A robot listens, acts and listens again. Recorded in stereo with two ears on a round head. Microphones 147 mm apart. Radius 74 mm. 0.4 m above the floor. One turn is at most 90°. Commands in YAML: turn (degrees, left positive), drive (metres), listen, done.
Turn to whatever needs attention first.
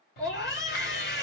turn: 50
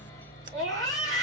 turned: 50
done: "Facing the scream."